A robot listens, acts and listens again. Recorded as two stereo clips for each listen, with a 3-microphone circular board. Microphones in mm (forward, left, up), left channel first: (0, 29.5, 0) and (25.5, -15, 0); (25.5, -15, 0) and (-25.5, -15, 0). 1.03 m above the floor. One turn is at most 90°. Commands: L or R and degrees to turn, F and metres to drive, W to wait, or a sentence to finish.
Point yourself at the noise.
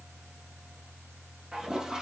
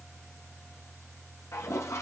L15
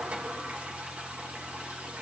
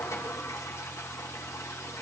Facing the toilet flushing.